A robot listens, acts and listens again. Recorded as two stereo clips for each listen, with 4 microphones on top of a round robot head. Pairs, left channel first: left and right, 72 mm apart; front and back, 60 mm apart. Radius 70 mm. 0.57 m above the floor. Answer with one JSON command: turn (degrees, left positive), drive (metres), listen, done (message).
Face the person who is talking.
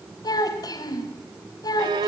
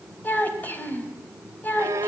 {"turn": 60}
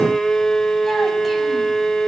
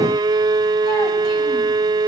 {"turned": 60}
{"listen": true}
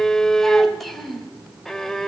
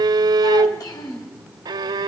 {"done": "Facing the child speaking."}